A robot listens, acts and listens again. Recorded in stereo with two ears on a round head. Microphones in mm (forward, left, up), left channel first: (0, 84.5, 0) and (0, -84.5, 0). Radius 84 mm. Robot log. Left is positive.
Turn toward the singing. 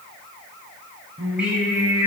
cmd yaw -30
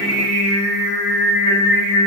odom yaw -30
note: So it is at 145° right.
cmd yaw -145
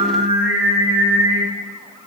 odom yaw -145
note: The singing is now 30° right.
cmd yaw -30
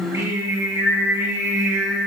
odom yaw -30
note: The singing is now 15° right.
cmd yaw -15
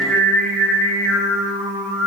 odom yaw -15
end: Found it: singing, straight ahead.